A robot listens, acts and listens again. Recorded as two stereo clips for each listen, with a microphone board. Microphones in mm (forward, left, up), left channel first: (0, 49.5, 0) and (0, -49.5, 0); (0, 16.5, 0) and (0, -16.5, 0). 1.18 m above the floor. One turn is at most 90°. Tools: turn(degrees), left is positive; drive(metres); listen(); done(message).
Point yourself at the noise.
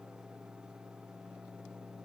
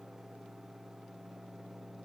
listen()
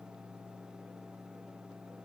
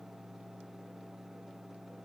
listen()
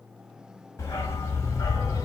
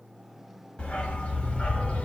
turn(degrees=30)
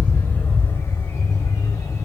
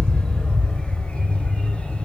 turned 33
turn(degrees=30)
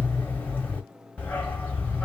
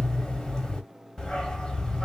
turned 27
turn(degrees=10)
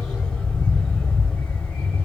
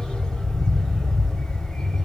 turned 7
done("Found it: a dog barking, straight ahead, 1 to 2 m away.")